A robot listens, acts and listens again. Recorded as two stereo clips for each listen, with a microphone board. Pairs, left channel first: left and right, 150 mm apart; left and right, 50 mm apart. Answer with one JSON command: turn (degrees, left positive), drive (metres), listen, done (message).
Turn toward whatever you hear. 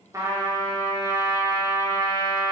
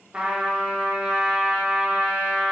{"turn": -25}
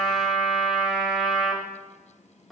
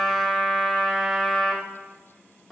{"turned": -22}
{"done": "Found it: a trumpet, straight ahead."}